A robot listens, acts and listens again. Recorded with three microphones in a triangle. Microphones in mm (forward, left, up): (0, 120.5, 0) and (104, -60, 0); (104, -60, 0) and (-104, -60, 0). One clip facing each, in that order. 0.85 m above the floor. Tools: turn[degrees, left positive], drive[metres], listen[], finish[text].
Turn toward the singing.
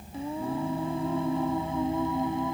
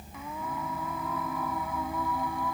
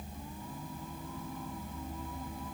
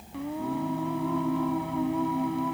Thought: The singing: 175° right.
Action: turn[-175]
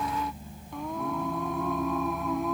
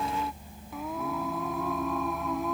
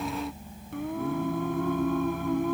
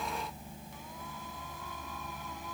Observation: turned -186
Thought: The singing is now 30° left.
Action: turn[30]
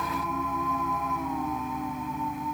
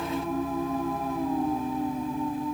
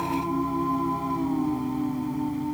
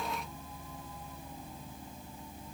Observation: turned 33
Action: finish[Facing the singing.]